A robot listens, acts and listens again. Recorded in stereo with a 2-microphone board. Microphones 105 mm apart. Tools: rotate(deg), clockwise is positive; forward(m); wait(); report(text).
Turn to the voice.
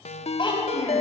rotate(-45)
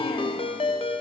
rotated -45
wait()
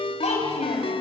rotate(-90)
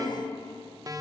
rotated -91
report("Found it: a child speaking, straight ahead, over 4 m away.")